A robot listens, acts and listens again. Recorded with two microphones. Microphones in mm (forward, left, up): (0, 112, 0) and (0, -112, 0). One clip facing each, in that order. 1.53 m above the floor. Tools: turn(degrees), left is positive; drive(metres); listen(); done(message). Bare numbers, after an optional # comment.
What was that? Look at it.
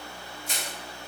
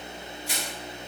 # The crushing: about 70° right or 110° right.
turn(-70)
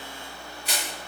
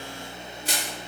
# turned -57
# So it is at 50° right.
turn(-50)
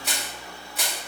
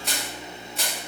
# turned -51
done("Found it: crushing, straight ahead.")